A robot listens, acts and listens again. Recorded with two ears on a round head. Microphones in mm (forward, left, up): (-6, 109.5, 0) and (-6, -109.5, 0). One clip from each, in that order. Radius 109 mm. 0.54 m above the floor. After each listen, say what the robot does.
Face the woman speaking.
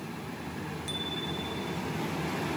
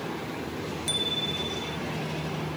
Keep listening.
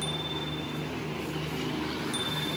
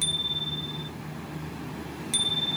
Keep listening.
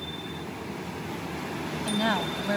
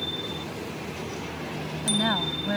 Turn 25° left.
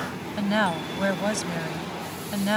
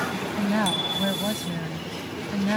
Turn 130° left.
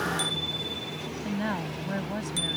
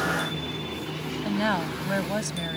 Turn 35° right.
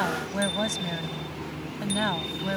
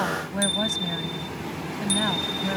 Turn 15° left.
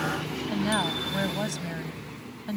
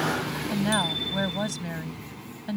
Found it: a woman speaking, straight ahead.